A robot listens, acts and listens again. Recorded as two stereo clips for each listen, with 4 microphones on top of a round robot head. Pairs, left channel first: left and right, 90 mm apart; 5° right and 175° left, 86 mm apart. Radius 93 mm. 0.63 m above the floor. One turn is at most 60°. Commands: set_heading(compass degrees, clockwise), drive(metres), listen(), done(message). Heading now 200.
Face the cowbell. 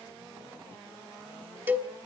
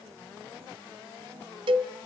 set_heading(260)
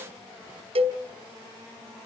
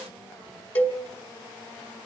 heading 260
set_heading(320)
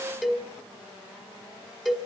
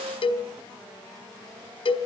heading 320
done("Facing the cowbell, 2 to 4 m away.")